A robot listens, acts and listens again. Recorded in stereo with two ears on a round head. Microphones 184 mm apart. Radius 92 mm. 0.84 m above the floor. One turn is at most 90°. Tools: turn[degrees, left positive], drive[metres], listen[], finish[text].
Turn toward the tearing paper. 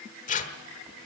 Thought: The tearing paper: about 35° left or 145° left.
Action: turn[35]
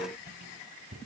Action: listen[]
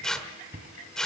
Action: finish[Facing the tearing paper, 1 to 2 m away.]